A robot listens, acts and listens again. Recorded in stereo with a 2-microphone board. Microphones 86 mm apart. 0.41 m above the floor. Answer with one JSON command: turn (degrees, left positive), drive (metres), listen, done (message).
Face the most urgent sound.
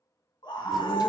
{"turn": 60}
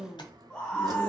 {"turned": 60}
{"turn": 10}
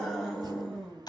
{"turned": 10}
{"done": "Facing the scream."}